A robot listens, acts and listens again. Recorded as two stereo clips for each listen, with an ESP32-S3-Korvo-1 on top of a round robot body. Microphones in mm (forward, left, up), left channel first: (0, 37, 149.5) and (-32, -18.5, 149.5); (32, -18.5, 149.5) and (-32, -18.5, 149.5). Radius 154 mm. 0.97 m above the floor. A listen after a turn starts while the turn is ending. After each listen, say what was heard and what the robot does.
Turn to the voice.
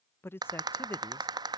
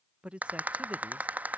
The man speaking: 110° left. Turn 110° left.
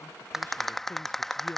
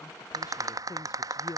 Keep listening.
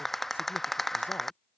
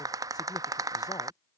Keep listening.
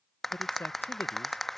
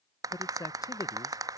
Facing the man speaking.